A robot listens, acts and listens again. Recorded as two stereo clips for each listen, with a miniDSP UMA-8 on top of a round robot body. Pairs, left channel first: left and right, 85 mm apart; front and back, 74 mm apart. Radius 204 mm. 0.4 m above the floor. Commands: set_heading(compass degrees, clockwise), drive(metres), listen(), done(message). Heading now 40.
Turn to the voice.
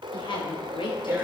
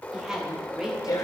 set_heading(300)
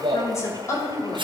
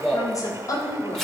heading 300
set_heading(260)
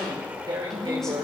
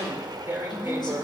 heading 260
listen()
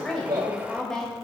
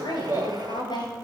done("Facing the woman speaking.")